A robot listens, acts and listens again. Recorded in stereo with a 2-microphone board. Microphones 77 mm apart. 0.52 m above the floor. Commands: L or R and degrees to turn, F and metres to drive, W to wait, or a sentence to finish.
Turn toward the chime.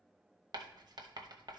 W
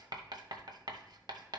W
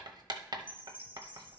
R25
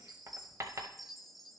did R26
Found it: a chime, straight ahead, under 1 m away.